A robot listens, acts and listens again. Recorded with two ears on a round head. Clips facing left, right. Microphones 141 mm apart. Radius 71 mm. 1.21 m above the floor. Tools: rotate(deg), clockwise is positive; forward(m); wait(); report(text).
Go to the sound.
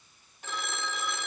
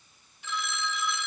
rotate(-45)
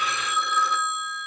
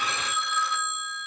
rotate(-85)
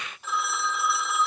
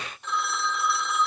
forward(1.0)
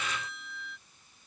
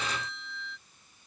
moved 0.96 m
forward(1.0)
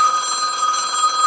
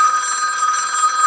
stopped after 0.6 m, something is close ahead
rotate(-20)
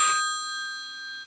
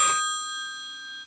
report("Arrived at the phone ringing, straight ahead.")